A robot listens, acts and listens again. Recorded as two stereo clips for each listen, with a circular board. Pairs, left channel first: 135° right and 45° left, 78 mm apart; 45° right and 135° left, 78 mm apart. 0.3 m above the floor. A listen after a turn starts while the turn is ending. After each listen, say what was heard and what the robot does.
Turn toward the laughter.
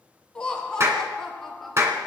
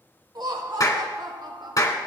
The laughter: 135° left. Turn 135° left.
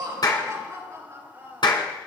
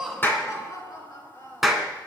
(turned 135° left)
The laughter is now 10° right. Turn 10° right.
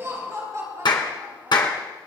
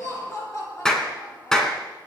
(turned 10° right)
Found it: laughter, straight ahead.